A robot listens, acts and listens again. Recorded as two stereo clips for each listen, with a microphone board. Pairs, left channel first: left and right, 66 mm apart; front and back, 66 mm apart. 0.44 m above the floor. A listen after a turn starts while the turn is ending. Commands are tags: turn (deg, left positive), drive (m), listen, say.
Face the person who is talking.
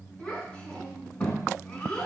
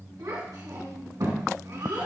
<turn deg="165"/>
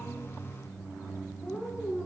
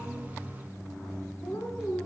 <turn deg="25"/>
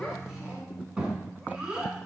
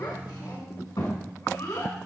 <turn deg="-10"/>
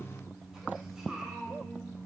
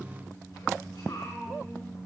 <say>Facing the child speaking, 2 to 4 m away.</say>